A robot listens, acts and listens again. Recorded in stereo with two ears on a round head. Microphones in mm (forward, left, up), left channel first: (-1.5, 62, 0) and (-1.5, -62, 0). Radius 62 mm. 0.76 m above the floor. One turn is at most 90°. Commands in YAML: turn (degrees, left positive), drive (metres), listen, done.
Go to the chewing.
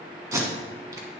listen: true
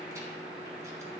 listen: true
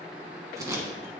done: "I can't make out chewing, only tape being pulled."